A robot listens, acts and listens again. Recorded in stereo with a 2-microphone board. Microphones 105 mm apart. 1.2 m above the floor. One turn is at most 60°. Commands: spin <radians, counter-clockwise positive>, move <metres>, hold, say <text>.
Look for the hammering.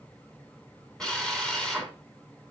hold
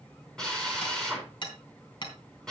spin 0.79
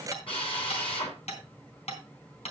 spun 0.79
spin 1.05
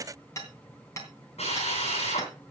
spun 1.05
spin 0.52
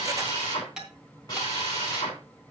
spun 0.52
say Found it: hammering, straight ahead.